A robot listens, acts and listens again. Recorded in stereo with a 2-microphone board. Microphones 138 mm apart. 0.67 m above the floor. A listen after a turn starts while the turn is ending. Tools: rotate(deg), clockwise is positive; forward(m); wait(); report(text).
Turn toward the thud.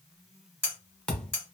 rotate(-30)
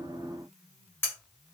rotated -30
wait()
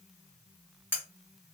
report("I heard a thud, but can't make it out now. It was about 25° right or 145° left.")